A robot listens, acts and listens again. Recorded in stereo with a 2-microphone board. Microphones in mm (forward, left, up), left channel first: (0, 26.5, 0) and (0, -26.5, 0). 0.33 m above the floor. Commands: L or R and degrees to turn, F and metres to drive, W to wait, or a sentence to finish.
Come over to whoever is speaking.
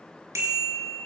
W
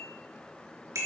W
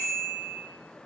I can't make out anyone speaking, only a bicycle bell.